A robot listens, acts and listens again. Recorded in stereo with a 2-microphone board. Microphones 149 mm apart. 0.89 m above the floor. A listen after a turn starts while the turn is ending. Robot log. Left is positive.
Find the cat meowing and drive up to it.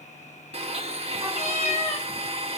note: The cat meowing: about 45° left or 135° left.
cmd yaw +45
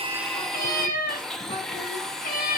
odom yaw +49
note: So it is at 85° left.
cmd yaw +85
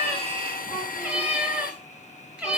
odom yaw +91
note: The cat meowing is now 10° right.
cmd yaw -10
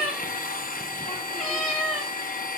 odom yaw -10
cmd fwd 1.0
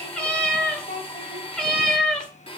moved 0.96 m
cmd fwd 1.0
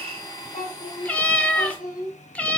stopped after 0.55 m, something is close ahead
note: The cat meowing is now 10° left.
cmd yaw +10
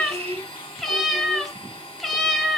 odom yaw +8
end: I am next to the cat meowing.